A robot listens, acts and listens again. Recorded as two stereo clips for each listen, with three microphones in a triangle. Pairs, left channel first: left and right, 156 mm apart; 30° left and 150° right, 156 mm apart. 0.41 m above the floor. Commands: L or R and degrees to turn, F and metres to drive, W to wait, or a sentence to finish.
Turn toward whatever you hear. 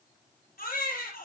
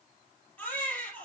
L110
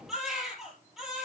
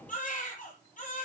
Facing the baby crying.